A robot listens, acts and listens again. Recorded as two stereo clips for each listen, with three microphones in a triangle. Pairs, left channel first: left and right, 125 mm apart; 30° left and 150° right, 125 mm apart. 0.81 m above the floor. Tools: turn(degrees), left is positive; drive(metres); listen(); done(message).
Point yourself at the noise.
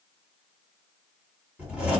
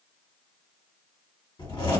turn(degrees=-10)
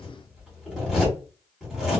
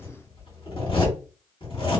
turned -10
done("Found it: a zipper, straight ahead, 1 to 2 m away.")